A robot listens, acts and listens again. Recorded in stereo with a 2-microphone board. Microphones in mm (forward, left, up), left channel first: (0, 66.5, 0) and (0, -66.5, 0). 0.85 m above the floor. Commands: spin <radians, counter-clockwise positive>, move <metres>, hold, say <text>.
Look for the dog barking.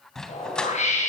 spin 0.52
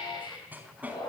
spin -0.17
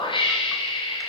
hold
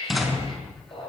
say Found it: a dog barking, straight ahead, over 4 m away.